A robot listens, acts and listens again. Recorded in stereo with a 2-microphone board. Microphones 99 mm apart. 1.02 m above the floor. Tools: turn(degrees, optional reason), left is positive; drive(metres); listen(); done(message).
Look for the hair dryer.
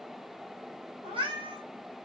listen()
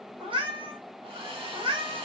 turn(degrees=-65, reason="The hair dryer: about 65° right or 115° right.")
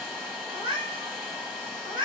done("Facing the hair dryer.")